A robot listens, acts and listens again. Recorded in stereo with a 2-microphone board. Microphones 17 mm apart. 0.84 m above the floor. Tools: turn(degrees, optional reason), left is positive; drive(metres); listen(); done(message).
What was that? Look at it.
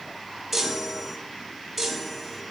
turn(degrees=30)
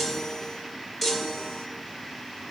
turn(degrees=150, reason="So it is at 150° left.")
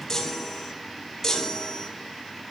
turn(degrees=15, reason="The chime is now 15° left.")
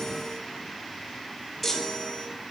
done("Found it: a chime, straight ahead, 1 to 2 m away.")